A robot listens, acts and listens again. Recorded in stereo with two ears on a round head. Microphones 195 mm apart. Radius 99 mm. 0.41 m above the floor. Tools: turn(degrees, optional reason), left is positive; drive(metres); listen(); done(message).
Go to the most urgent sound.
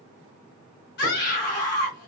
turn(degrees=50, reason="The scream: about 50° left or 130° left.")
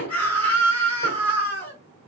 turn(degrees=10, reason="So it is at 10° left.")
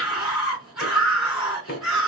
drive(metres=1.0)
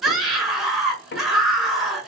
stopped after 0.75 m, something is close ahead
done("Arrived at the scream, straight ahead.")